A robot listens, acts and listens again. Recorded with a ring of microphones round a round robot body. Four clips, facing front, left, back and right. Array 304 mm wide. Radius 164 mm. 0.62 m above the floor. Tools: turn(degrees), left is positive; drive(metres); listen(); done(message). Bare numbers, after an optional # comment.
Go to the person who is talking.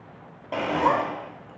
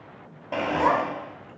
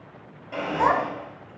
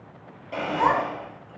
# The child speaking: 160° left.
turn(160)
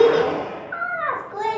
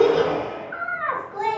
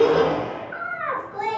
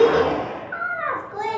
# The child speaking is now 30° right.
turn(-30)
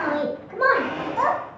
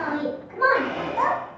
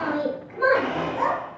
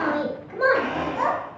# The child speaking is now 25° right.
turn(-25)
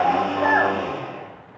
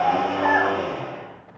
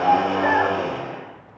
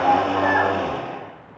drive(1.0)
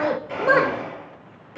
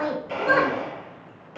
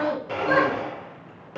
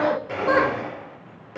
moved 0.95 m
drive(1.0)
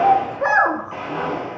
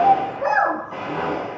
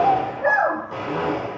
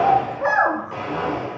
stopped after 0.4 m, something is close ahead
done("I am next to the child speaking.")